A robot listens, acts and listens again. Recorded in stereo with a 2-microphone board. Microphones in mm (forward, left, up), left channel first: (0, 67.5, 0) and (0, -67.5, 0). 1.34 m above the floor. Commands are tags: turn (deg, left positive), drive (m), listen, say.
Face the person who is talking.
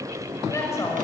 <turn deg="20"/>
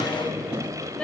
<turn deg="30"/>
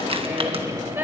<turn deg="-15"/>
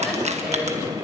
<listen/>
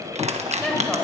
<say>Facing the woman speaking.</say>